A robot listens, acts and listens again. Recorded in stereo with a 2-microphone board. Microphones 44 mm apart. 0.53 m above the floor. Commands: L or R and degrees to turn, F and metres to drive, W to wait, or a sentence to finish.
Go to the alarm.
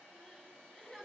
W
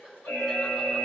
L90
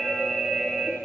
F1.0
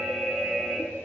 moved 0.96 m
F1.0
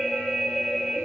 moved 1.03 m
F1.0
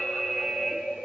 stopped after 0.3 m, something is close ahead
I am next to the alarm.